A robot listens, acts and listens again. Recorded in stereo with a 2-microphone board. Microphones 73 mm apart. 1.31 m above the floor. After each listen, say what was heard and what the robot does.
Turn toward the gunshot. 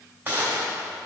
The gunshot: about 25° right or 155° right. Turn 25° right.
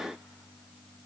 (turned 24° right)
Keep listening.
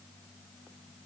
I heard a gunshot, but can't make it out now. It was about 5° right or 130° right.